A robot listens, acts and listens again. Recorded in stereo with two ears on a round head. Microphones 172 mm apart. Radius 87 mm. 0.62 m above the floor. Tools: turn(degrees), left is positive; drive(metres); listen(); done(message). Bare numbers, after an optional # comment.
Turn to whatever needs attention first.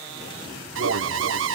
# The alarm: about 70° right or 110° right.
turn(-70)
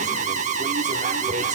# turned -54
# So it is at 40° right.
turn(-40)
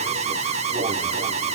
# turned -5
# The alarm is now 35° right.
turn(-35)
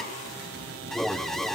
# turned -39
done("Found it: an alarm, straight ahead, under 1 m away.")